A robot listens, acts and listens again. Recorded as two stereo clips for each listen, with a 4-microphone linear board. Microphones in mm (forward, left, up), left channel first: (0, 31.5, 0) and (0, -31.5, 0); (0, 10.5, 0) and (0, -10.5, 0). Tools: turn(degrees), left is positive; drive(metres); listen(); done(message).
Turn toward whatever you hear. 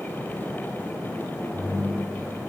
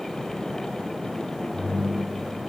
turn(degrees=90)
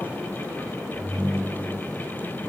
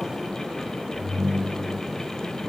turn(degrees=-15)
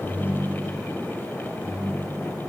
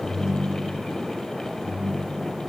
turn(degrees=-10)
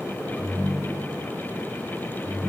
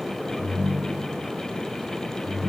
done("Facing the ringtone.")